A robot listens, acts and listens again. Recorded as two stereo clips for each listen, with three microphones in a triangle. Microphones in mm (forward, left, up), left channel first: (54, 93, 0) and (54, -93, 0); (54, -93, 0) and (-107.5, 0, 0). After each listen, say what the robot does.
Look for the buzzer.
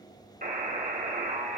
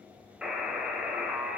Turn 125° right.
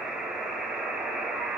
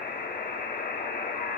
Found it: a buzzer, straight ahead, 2 to 4 m away.